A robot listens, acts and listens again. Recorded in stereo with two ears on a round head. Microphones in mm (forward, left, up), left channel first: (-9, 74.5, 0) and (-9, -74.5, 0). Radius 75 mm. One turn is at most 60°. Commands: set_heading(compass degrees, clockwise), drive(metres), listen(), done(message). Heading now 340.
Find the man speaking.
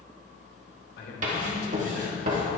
set_heading(280)
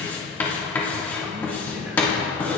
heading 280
set_heading(290)
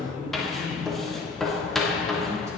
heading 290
set_heading(305)
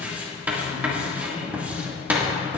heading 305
done("Found it: a man speaking, straight ahead.")